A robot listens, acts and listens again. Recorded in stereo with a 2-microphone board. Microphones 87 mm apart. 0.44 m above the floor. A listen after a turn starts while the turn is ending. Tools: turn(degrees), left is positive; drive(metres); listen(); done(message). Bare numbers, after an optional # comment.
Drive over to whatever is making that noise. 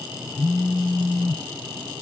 # The phone buzzing: about 25° left or 155° left.
turn(25)
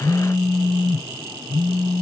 drive(1.0)
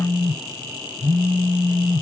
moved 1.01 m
drive(1.0)
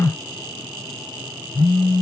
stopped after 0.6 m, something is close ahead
done("I am next to the phone buzzing.")